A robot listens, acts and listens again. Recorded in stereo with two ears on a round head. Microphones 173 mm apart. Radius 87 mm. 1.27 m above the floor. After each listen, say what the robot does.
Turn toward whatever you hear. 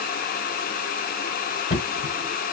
Turn 45° left.
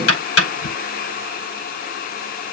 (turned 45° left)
Turn 90° left.
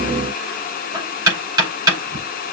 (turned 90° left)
Turn 20° right.
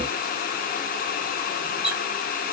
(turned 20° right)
Facing the knocking.